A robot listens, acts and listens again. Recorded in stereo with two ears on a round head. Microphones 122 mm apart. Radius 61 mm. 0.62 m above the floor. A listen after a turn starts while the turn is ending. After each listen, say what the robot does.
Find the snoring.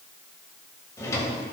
Keep listening.
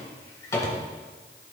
Keep listening.
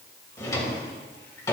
I can't make out snoring to turn to.